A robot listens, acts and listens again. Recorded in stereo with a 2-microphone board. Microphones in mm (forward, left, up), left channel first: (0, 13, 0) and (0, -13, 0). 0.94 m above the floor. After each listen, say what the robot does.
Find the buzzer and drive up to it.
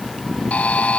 Turn 75° left.
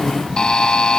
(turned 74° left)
Turn 30° left.
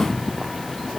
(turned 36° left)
Keep listening.
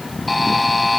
Drive 1.0 m forward.
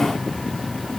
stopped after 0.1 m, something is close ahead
Keep listening.
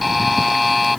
Something is in my way. I am facing the buzzer but have not reached it.